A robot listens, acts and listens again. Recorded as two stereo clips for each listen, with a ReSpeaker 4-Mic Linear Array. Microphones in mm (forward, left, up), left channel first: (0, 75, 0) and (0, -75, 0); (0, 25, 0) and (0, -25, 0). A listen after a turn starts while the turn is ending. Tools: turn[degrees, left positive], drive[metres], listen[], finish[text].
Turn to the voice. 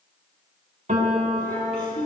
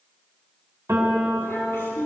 Thought: The child speaking: about 60° left or 120° left.
Action: turn[60]
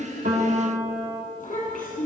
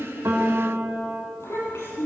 Thought: So it is at 60° left.
Action: turn[60]
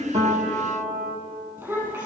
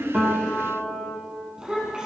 Thought: The child speaking is now 20° right.
Action: turn[-20]
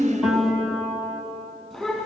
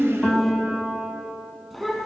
Action: finish[Found it: a child speaking, straight ahead, over 4 m away.]